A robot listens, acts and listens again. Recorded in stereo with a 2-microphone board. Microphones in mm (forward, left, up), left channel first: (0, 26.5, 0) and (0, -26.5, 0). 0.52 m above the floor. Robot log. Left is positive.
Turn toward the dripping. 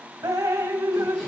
cmd yaw -90
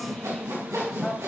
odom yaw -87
note: So it is at 10° left.
cmd yaw +10
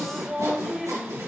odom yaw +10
end: Found it: dripping, straight ahead.